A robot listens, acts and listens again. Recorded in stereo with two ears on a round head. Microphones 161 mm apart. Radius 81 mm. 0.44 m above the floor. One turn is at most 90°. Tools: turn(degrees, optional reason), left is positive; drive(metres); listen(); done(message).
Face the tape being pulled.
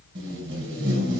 turn(degrees=-75, reason="The tape being pulled: about 75° right or 105° right.")
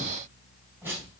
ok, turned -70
turn(degrees=-15, reason="So it is at 15° right.")
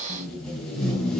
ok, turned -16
done("Found it: tape being pulled, straight ahead, 2 to 4 m away.")